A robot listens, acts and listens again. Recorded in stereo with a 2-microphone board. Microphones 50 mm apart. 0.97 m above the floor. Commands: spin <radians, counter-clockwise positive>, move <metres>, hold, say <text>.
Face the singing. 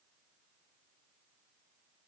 hold
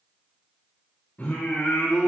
spin 0.79
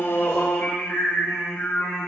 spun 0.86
spin 1.05
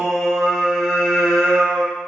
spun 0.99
say Facing the singing, 2 to 4 m away.